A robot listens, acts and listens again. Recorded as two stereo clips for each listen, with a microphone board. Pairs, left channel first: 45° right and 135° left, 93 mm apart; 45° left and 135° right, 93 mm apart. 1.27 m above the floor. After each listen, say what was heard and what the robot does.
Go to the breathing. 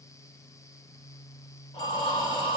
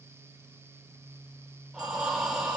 The breathing: 45° right. Turn 45° right.
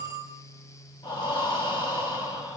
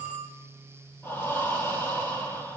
The breathing is now 15° right. Turn 15° right.
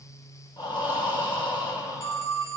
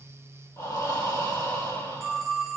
The breathing is now 10° right. Turn 10° right.
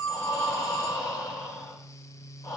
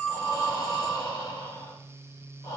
Drive 1.0 m forward.
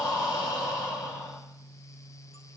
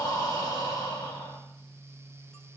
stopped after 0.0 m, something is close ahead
Something is in my way. I am facing the breathing but have not reached it.